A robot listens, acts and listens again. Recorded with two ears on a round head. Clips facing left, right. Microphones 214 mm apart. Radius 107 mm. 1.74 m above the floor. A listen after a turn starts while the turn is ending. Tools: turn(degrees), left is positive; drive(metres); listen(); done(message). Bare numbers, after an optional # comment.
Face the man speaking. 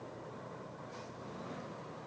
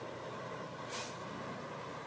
listen()
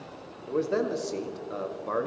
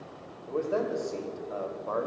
# The man speaking: about 30° left or 150° left.
turn(30)
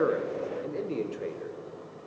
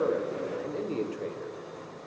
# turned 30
done("Facing the man speaking, 1 to 2 m away.")